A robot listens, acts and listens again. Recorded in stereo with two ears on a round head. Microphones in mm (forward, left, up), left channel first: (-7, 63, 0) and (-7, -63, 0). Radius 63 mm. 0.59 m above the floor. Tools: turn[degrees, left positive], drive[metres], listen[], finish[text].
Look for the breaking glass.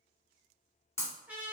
Thought: The breaking glass: about 20° left or 160° left.
Action: turn[20]
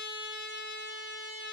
Action: listen[]
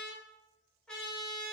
Action: finish[I heard breaking glass, but can't make it out now. It was about straight ahead or 140° left.]